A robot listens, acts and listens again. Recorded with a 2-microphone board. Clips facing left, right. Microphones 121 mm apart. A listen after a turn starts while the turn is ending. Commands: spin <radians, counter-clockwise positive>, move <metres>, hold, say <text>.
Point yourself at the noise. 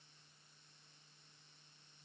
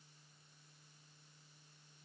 hold
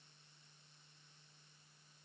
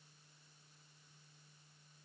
hold
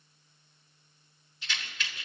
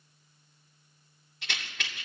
spin -1.31
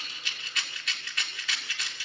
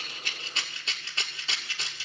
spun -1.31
spin -0.52
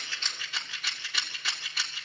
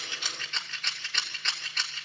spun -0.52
spin 0.17
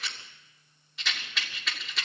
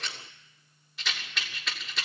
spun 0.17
say Facing the rattle.